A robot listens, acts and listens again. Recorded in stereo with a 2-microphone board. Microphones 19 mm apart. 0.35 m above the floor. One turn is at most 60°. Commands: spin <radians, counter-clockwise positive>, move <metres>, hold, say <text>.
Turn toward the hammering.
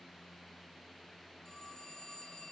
hold
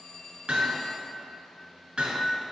spin -1.05
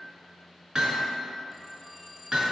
spin -0.79
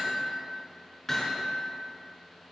spin 0.17
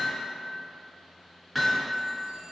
say Facing the hammering.